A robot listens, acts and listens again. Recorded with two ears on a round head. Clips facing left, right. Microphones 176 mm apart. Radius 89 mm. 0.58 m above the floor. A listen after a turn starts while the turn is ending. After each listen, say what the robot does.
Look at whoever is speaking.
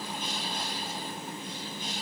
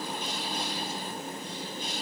Keep listening.
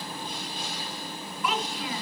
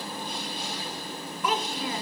Turn 35° right.
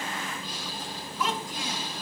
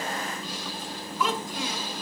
Turn 105° right.
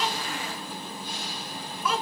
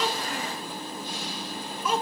Turn 20° right.
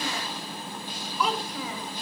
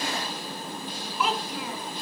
Found it: a child speaking, straight ahead.